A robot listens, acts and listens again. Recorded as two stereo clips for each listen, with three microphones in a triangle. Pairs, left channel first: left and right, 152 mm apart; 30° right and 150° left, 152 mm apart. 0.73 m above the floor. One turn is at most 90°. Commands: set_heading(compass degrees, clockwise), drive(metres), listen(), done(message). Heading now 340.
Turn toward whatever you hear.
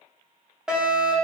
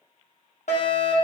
done("Facing the fire alarm.")